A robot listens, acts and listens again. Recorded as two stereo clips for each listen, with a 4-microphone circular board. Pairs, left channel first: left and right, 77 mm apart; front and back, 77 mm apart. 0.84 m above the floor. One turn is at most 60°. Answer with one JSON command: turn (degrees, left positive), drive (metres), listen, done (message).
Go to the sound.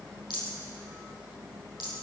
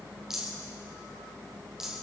{"turn": 60}
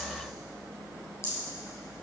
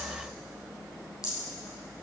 {"turn": 40}
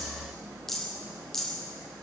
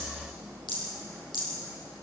{"drive": 1.0}
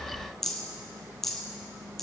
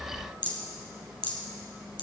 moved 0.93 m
{"drive": 1.0}
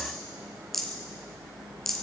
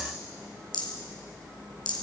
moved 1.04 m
{"drive": 1.0}
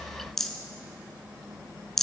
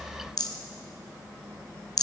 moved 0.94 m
{"drive": 1.0}
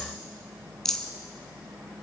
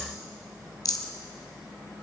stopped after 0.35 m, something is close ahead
{"done": "I am next to the rattle."}